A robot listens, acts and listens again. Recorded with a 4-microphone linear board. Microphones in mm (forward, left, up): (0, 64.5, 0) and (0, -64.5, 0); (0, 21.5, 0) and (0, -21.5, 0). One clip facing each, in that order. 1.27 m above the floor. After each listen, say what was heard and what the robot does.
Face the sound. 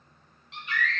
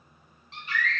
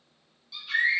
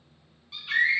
The scream: about 35° right or 145° right. Turn 35° right.
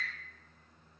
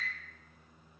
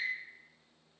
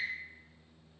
Facing the scream.